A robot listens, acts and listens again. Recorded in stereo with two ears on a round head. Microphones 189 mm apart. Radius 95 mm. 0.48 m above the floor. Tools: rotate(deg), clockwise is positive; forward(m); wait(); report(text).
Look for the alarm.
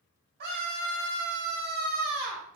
wait()
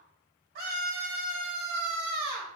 wait()
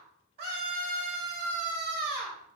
report("I can't make out an alarm to turn to.")